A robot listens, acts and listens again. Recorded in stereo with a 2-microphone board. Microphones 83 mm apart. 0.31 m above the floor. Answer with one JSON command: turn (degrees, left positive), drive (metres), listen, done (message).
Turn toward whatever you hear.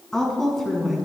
{"turn": 30}
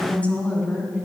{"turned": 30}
{"turn": 30}
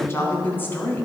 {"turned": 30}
{"turn": 160}
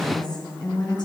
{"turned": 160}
{"turn": 60}
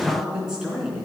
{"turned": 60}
{"turn": -10}
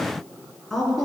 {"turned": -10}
{"done": "Facing the woman speaking, 2 to 4 m away."}